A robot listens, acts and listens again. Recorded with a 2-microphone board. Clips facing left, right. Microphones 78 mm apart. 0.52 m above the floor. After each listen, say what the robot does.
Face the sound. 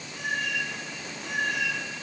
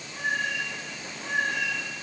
Turn 30° right.
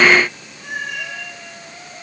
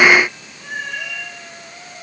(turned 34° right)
Turn 10° left.
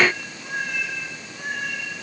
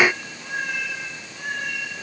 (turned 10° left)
Facing the cat meowing.